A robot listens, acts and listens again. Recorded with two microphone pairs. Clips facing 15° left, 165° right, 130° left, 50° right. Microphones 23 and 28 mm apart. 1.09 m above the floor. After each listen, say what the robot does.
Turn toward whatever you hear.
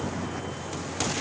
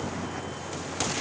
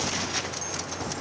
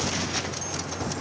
Keep listening.
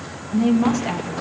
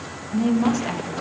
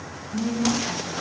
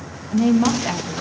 Turn 75° right.
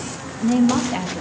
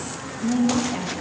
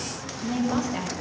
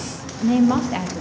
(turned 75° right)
Turn 35° right.
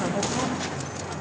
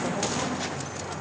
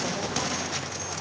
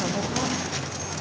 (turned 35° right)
Keep listening.
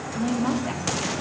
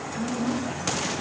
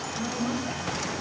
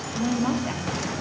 Turn 15° right.
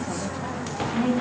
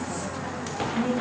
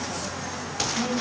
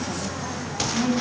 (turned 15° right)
Found it: a woman speaking, straight ahead, 2 to 4 m away.